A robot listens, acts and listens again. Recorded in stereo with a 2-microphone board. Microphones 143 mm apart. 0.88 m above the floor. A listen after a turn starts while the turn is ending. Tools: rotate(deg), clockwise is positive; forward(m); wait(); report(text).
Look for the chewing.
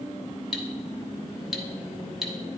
wait()
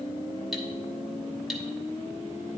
wait()
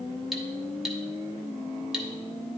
report("I can't make out chewing to turn to.")